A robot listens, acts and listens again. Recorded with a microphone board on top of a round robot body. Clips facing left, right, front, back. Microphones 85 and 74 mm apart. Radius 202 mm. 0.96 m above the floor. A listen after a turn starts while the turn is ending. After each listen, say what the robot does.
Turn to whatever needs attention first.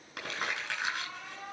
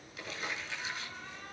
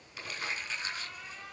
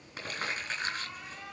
Turn 95° left.
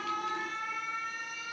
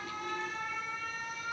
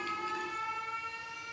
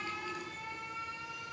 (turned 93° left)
Found it: an alarm, straight ahead.